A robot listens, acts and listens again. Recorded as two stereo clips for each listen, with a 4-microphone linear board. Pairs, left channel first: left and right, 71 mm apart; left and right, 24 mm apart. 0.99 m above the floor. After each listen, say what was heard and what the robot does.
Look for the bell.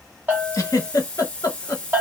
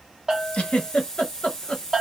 The bell: about 25° right or 155° right. Turn 25° right.
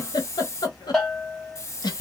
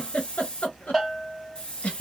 Found it: a bell, straight ahead, 1 to 2 m away.